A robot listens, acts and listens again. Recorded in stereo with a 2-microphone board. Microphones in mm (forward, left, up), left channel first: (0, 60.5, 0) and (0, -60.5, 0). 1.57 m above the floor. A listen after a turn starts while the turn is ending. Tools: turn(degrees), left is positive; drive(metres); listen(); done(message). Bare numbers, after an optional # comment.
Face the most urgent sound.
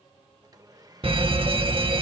# The fire alarm: about 50° right or 130° right.
turn(-50)
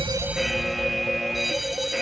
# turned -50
done("Found it: a fire alarm, straight ahead.")